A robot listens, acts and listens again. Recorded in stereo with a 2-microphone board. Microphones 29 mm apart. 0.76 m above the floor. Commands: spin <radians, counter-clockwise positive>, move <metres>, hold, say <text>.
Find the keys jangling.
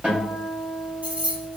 spin -0.96
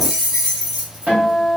spin -0.35
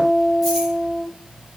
hold
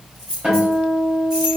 spin -0.26
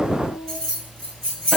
spin -0.26
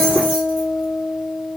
hold
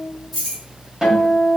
say Found it: keys jangling, straight ahead, 2 to 4 m away.